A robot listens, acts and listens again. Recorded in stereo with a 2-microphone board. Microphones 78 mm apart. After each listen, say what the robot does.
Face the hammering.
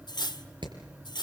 Turn 90° right.
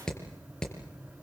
Turn 10° left.
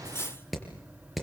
Facing the hammering.